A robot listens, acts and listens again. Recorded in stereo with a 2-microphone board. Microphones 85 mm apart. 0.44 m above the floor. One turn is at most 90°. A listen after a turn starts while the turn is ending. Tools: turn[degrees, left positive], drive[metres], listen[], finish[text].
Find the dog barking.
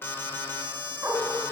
Thought: The dog barking: about 35° right or 145° right.
Action: turn[-35]
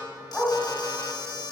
Action: finish[Facing the dog barking.]